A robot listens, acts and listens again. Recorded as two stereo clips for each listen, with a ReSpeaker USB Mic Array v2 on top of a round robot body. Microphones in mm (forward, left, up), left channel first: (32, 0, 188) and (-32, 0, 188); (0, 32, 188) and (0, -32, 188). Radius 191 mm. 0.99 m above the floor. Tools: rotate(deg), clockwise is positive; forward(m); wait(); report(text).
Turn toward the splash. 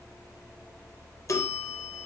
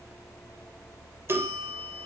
wait()
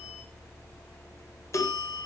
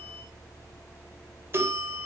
wait()
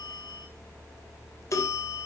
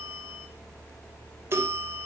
report("I can't make out a splash, only a bell.")